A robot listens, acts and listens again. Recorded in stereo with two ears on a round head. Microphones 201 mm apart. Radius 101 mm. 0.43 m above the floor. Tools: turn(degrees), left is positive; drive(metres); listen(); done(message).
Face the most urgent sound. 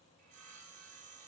listen()
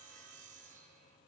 listen()
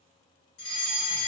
turn(degrees=55)
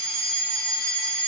turn(degrees=25)
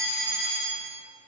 done("Found it: a fire alarm, straight ahead.")